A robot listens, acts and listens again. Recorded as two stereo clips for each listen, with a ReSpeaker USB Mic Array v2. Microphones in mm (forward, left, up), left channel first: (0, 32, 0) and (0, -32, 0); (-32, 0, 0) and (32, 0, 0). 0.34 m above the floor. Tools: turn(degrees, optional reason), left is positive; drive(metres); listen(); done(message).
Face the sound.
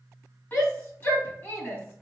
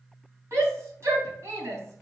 turn(degrees=35, reason="The shout: 35° left.")
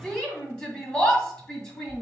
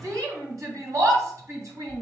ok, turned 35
turn(degrees=15, reason="The shout is now 15° left.")
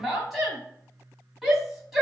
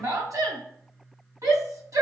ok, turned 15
done("Facing the shout, 2 to 4 m away.")